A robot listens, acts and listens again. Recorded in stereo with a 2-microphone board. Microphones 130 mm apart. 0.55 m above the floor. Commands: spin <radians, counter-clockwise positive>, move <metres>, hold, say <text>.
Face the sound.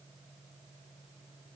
hold
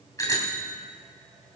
spin 0.44
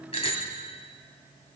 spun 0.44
spin 2.27
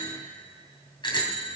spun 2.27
spin 0.70
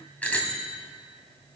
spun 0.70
spin 0.17
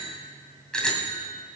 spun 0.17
say Found it: a bicycle bell, straight ahead.